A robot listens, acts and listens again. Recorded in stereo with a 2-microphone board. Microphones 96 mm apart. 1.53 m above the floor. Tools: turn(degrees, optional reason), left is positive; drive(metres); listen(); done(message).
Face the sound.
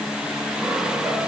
listen()
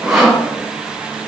turn(degrees=-30)
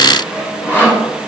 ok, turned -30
turn(degrees=25, reason="So it is at 25° left.")
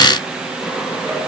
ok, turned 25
listen()
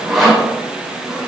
done("Found it: sawing, straight ahead, 2 to 4 m away.")